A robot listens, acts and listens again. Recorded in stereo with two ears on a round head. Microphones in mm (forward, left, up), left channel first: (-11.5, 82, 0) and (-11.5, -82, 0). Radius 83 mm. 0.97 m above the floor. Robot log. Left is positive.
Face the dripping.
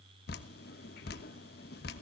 note: The dripping: about 55° left or 125° left.
cmd yaw +55
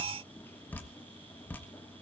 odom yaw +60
note: So it is at 10° left.
cmd yaw +10
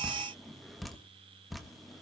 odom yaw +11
end: Found it: dripping, straight ahead, 1 to 2 m away.